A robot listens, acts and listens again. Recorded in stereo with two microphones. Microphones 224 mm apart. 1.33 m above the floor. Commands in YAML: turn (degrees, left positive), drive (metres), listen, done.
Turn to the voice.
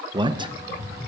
turn: -20
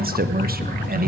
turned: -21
turn: -140
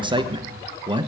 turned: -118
turn: -20
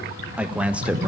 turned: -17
done: "Found it: a man speaking, straight ahead."